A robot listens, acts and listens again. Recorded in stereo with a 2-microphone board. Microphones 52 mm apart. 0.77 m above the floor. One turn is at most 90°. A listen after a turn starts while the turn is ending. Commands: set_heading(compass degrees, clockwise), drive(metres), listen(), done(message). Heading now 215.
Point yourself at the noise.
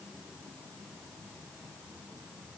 listen()
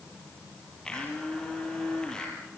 set_heading(200)
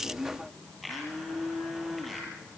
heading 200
done("Facing the blender, over 4 m away.")